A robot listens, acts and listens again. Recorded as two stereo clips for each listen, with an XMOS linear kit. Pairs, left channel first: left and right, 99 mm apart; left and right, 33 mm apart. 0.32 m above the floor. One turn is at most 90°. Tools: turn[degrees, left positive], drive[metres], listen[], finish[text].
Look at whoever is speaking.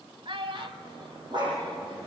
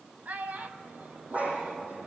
Thought: The child speaking: about 60° right or 120° right.
Action: turn[-60]
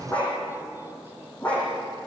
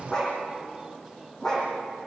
Action: listen[]
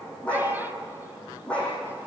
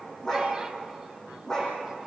Action: listen[]
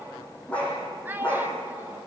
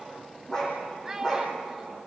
Thought: So it is at 25° right.
Action: turn[-25]
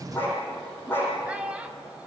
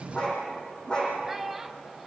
Thought: The child speaking is now 15° right.
Action: turn[-15]
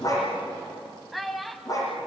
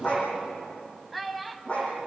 Action: finish[Facing the child speaking, 1 to 2 m away.]